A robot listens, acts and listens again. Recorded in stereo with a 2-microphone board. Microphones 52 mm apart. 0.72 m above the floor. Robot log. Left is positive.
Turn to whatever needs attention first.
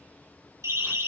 cmd yaw -90
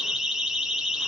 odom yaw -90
end: Facing the siren, over 4 m away.